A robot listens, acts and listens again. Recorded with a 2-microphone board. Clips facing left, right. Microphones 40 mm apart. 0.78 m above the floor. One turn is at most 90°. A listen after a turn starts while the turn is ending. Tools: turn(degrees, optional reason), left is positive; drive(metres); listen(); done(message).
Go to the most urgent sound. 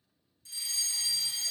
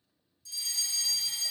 turn(degrees=40, reason="The fire alarm: about 40° left or 140° left.")
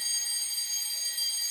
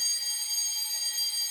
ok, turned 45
drive(metres=1.0)
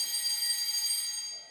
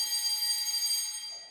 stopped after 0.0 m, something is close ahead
done("Blocked. The fire alarm is further on, straight ahead.")